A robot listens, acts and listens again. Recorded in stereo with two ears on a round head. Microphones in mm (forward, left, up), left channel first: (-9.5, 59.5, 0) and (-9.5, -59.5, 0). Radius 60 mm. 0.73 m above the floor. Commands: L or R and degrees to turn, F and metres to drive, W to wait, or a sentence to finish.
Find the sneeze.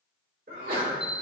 R75
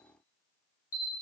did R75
W
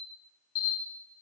I heard a sneeze, but can't make it out now. It was about straight ahead or 30° right.